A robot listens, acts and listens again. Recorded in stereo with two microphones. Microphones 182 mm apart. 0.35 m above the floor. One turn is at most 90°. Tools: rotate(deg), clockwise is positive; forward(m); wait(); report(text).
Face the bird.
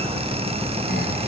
wait()
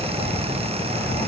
wait()
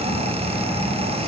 report("I can't make out a bird to turn to.")